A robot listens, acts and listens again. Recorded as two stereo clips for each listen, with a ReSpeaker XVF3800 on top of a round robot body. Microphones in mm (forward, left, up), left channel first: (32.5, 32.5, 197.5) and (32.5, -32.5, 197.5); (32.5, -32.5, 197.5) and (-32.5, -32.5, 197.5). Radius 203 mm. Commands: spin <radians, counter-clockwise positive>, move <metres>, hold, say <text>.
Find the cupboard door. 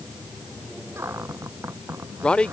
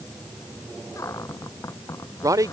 spin -0.70
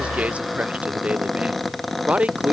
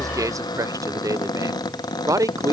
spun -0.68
say Found it: a cupboard door, straight ahead.